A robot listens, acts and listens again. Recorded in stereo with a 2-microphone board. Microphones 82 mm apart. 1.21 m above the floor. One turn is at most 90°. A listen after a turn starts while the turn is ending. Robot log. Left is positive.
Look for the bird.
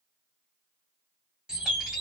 cmd yaw -30
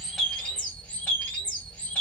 note: So it is at 20° left.
cmd yaw +20
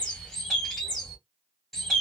end: Facing the bird.